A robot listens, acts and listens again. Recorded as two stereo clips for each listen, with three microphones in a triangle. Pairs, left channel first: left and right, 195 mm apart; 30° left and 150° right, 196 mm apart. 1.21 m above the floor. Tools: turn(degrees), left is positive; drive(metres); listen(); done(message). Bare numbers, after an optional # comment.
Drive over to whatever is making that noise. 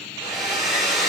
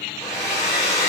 # The hair dryer: 45° right.
turn(-45)
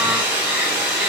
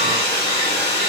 # The hair dryer is now 10° right.
turn(-10)
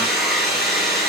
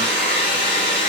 drive(1.0)
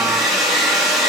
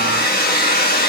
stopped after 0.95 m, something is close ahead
done("I am next to the hair dryer.")